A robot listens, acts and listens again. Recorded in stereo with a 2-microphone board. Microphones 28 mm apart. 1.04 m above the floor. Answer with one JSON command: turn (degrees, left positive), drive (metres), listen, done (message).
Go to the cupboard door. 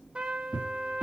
{"turn": -50}
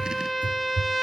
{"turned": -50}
{"turn": -80}
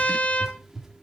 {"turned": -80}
{"turn": -20}
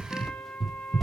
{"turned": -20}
{"drive": 1.0}
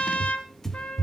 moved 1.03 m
{"turn": 10}
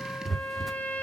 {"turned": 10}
{"drive": 1.0}
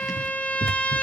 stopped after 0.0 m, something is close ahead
{"done": "I am next to the cupboard door."}